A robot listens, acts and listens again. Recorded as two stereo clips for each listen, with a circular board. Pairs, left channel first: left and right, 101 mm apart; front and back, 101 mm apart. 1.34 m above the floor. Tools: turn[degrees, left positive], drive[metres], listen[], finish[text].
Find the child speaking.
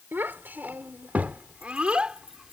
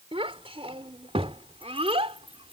Thought: The child speaking: 170° right.
Action: turn[-170]
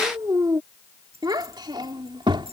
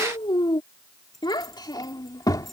Thought: The child speaking is now 50° right.
Action: turn[-50]
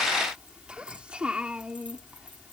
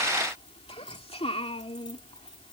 Thought: The child speaking is now 10° right.
Action: turn[-10]
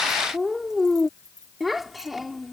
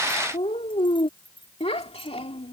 Action: finish[Found it: a child speaking, straight ahead.]